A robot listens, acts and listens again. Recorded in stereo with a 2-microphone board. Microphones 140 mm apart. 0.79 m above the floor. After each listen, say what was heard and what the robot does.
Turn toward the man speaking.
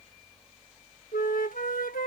Keep listening.
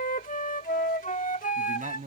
The man speaking: about 70° right or 110° right. Turn 70° right.
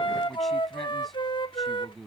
Found it: a man speaking, straight ahead.